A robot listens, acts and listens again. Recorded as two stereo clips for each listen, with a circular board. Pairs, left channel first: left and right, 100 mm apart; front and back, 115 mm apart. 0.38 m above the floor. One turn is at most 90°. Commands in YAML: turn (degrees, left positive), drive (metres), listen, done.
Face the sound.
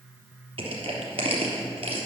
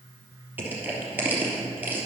turn: -90
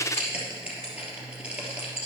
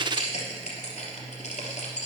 turn: -10
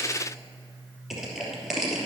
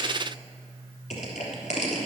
done: "Facing the crushing, 2 to 4 m away."